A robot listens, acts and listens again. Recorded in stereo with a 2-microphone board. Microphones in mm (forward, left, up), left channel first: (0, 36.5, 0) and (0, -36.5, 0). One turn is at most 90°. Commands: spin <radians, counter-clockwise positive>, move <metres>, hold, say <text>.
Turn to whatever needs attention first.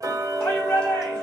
spin 0.52
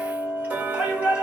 spin -0.26
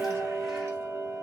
hold
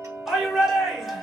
say Found it: a shout, straight ahead.